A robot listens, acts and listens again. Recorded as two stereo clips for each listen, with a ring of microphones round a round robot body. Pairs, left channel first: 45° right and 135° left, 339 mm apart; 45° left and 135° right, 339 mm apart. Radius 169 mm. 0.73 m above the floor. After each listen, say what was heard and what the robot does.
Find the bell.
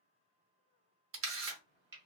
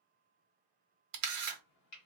Keep listening.
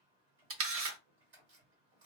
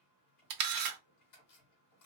Keep listening.
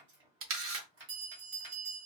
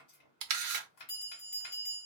The bell: 110° left. Turn 110° left.
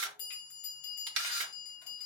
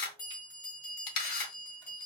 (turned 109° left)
Facing the bell.